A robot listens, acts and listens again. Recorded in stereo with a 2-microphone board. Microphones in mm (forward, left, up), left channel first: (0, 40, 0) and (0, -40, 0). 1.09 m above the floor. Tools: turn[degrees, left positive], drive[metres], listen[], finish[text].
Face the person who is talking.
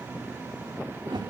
Action: listen[]
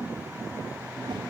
Action: listen[]
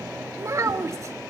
Thought: The child speaking: about 40° right or 140° right.
Action: turn[-40]
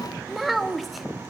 Action: finish[Facing the child speaking.]